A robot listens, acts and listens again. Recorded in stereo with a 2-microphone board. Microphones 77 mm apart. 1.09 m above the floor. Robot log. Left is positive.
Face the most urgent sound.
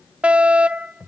note: The fire alarm: about 20° right or 160° right.
cmd yaw -20
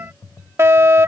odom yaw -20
note: So it is at 140° right.
cmd yaw -140
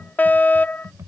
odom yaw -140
note: The fire alarm is now 25° left.
cmd yaw +25
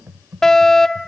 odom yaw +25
note: The fire alarm is now 10° left.
cmd yaw +10
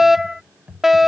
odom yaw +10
end: Facing the fire alarm.